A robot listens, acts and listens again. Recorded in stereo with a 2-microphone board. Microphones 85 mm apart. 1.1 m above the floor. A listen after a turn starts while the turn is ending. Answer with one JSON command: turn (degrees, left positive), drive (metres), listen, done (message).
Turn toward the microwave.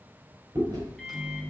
{"turn": 30}
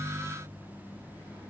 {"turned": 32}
{"turn": 150}
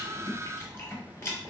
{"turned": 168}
{"turn": -20}
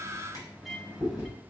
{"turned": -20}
{"done": "Found it: a microwave, straight ahead."}